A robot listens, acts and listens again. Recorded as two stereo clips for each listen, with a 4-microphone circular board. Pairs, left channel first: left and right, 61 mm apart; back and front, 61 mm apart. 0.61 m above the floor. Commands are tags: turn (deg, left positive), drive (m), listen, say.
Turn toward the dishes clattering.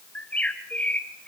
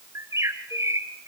<listen/>
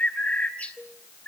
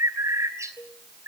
<turn deg="-165"/>
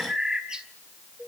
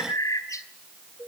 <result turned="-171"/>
<say>Found it: dishes clattering, straight ahead.</say>